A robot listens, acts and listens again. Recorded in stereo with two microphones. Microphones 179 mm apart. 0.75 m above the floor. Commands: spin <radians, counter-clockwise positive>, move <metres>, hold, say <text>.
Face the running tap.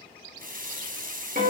spin -0.87
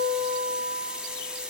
say Found it: a running tap, straight ahead, under 1 m away.